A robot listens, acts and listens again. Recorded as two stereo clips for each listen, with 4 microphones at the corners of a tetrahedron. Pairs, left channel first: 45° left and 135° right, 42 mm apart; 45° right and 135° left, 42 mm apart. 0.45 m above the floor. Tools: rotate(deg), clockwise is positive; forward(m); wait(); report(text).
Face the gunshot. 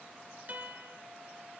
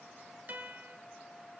wait()
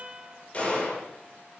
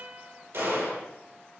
rotate(-110)
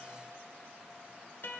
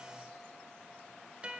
report("Facing where the gunshot came from. I can't hear it now.")